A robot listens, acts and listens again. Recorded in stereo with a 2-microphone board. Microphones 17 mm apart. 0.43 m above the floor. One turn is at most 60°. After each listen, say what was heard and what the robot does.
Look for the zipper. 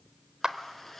Turn 30° left.
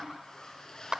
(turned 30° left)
So it is at 145° left. Turn 60° left.
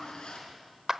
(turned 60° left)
The zipper is now 85° left. Turn 60° left.
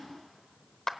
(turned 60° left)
Nothing new. It was at 25° left. Turn 25° left.
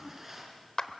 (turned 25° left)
Facing the zipper.